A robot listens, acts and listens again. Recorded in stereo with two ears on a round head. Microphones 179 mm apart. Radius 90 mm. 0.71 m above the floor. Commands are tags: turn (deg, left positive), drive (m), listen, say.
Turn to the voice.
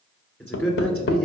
<turn deg="30"/>
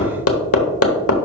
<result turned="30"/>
<listen/>
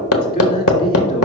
<turn deg="135"/>
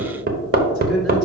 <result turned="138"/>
<listen/>
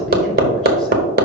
<listen/>
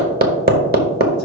<say>Facing where the man speaking came from. I can't hear it now.</say>